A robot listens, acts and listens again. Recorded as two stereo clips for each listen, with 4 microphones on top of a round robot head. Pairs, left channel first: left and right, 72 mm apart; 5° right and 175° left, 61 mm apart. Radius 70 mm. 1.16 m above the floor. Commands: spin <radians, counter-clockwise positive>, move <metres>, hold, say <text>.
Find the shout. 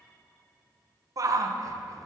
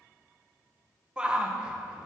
spin -1.92
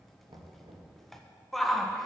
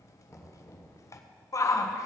say Facing the shout.